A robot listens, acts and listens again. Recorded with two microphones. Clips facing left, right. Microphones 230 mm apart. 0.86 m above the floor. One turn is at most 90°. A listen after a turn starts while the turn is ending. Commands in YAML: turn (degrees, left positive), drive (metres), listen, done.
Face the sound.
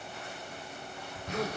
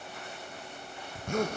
turn: -50
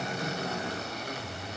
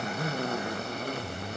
turn: -70
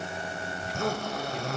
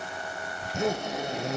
turn: -25
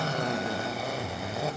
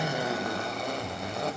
done: "Found it: a zipper, straight ahead, under 1 m away."